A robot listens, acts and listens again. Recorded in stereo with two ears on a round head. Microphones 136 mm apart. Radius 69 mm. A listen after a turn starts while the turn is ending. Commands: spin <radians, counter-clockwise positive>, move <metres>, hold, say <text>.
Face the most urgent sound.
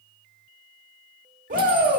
spin -0.96
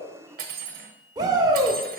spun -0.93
spin -0.52
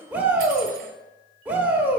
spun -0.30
spin -0.17
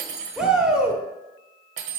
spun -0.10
say Found it: a shout, straight ahead, 1 to 2 m away.